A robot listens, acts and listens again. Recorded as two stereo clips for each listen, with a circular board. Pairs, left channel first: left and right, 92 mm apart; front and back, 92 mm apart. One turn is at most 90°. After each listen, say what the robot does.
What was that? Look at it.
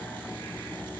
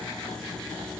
Keep listening.
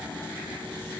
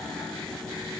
Keep listening.
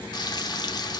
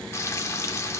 Turn 55° left.
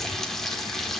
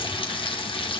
Facing the frying, 1 to 2 m away.